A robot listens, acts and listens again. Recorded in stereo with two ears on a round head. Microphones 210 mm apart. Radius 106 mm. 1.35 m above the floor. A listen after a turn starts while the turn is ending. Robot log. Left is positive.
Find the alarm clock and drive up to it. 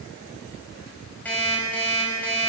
cmd yaw +30
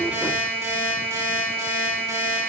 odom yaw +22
note: So it is at 15° right.
cmd yaw -15
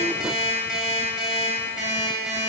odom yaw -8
cmd fwd 1.0
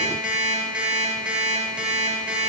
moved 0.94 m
cmd fwd 1.0
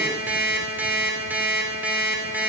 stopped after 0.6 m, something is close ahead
note: The alarm clock is now 10° right.
cmd yaw -10
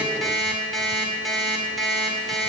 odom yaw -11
end: I am next to the alarm clock.